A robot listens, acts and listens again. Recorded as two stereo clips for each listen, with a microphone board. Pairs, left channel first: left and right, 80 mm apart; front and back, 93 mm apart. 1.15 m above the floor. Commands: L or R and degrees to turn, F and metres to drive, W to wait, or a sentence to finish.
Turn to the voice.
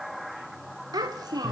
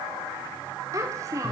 R125
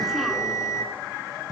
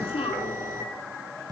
W
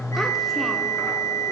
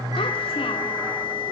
W
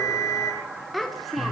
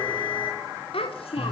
Facing the child speaking.